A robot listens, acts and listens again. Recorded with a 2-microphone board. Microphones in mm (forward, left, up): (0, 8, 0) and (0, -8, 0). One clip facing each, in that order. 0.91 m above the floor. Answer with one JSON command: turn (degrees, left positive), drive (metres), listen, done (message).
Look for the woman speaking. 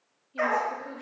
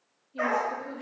{"turn": 20}
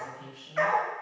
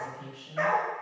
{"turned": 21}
{"done": "Found it: a woman speaking, straight ahead, 1 to 2 m away."}